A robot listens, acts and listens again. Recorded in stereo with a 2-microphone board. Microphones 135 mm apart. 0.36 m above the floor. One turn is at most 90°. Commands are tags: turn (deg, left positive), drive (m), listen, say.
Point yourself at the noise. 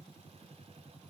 <listen/>
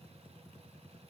<listen/>
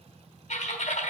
<turn deg="60"/>
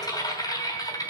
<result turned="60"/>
<turn deg="35"/>
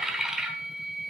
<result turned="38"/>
<say>Facing the typing on a keyboard.</say>